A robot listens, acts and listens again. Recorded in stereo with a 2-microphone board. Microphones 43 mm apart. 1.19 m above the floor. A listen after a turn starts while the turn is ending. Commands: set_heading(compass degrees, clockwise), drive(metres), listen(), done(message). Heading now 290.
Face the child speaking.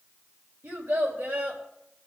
set_heading(0)
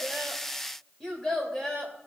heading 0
set_heading(345)
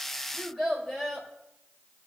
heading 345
done("Facing the child speaking, 2 to 4 m away.")